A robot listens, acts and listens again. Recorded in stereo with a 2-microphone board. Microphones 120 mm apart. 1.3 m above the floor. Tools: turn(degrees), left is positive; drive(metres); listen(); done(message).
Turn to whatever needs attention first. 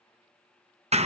listen()
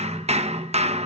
listen()
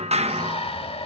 turn(degrees=55)
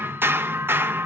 listen()
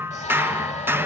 listen()
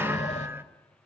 done("I heard a shout, but can't make it out now. It was about straight ahead or 70° left.")